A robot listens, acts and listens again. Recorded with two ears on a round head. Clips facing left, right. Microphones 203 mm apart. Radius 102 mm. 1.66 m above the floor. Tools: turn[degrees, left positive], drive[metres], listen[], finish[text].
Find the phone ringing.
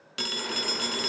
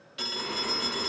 Thought: The phone ringing: about 65° left or 115° left.
Action: turn[65]
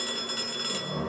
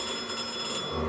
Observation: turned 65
Thought: So it is at 25° left.
Action: turn[25]
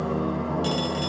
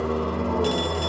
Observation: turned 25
Action: listen[]
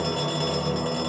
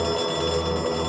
Action: listen[]
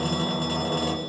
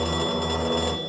Action: finish[Facing where the phone ringing came from. I can't hear it now.]